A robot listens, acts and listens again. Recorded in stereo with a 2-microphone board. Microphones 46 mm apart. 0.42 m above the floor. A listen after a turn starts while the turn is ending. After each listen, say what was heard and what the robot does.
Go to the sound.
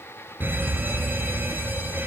The alarm: about 45° right or 135° right. Turn 45° right.
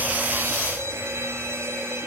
So it is at 90° right. Turn 90° right.
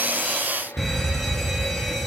Drive 1.0 m forward.
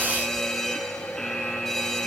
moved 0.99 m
Drive 1.0 m forward.
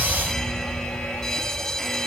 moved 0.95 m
The alarm is now 10° left. Turn 10° left.
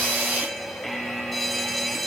Drive 1.0 m forward.
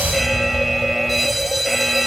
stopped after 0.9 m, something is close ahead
Arrived at the alarm, straight ahead.